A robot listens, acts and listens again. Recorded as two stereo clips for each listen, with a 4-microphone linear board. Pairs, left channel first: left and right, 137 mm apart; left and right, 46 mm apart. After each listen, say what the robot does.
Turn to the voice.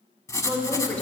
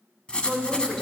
Turn 30° left.
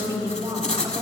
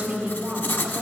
Turn 20° right.
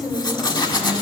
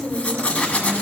Facing the woman speaking.